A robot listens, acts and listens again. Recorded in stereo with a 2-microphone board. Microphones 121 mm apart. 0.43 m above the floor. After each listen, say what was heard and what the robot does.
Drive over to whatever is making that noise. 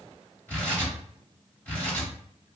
The tearing paper: about 15° left or 165° left. Turn 15° left.
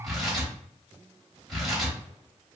Drive 1.0 m forward.
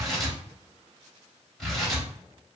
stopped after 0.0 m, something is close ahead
Blocked. The tearing paper is further on, straight ahead.